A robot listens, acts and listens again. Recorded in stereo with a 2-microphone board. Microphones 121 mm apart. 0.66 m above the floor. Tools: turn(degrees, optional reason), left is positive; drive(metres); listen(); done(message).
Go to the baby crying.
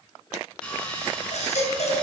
turn(degrees=70, reason="The baby crying: about 70° left or 110° left.")
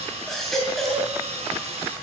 drive(metres=1.0)
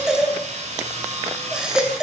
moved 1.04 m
drive(metres=1.0)
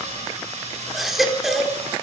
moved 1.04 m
drive(metres=1.0)
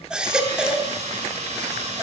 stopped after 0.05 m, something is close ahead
turn(degrees=-10, reason="The baby crying is now 10° right.")
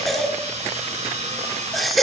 done("Arrived at the baby crying, straight ahead.")